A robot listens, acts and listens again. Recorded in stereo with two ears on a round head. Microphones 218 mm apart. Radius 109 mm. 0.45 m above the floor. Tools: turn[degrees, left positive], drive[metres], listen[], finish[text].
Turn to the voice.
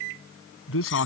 Thought: The man speaking: about 65° left or 115° left.
Action: turn[65]
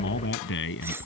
Thought: So it is at 55° left.
Action: turn[55]
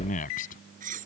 Thought: The man speaking is now 35° left.
Action: turn[35]
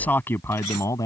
Thought: The man speaking is now 15° left.
Action: turn[15]
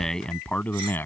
Thought: The man speaking is now 10° left.
Action: turn[10]
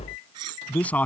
Action: finish[Facing the man speaking.]